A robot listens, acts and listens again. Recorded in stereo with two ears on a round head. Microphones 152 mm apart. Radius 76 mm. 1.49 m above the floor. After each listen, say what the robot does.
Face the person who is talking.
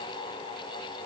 Keep listening.
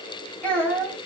Turn 30° left.
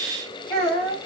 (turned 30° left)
Turn 140° left.
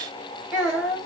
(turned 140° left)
Facing the child speaking, 2 to 4 m away.